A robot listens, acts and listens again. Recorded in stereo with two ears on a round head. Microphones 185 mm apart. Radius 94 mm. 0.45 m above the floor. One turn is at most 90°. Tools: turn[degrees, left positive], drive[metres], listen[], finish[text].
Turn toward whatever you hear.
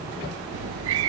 Action: turn[-90]
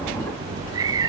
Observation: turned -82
Thought: So it is at 15° right.
Action: turn[-15]
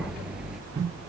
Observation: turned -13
Action: finish[Facing the cat meowing.]